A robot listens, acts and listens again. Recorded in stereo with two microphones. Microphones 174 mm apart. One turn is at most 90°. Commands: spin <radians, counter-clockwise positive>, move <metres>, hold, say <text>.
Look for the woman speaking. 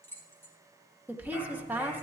spin -0.52
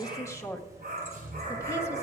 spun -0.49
spin 0.35
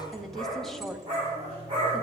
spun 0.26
say Facing the woman speaking, 1 to 2 m away.